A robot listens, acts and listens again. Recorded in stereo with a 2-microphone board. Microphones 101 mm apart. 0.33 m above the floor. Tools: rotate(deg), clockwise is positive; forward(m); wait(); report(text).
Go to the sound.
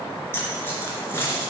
rotate(-25)
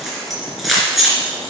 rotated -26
forward(1.0)
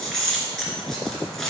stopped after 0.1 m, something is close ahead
report("Something is in my way. I am facing the keys jangling but have not reached it.")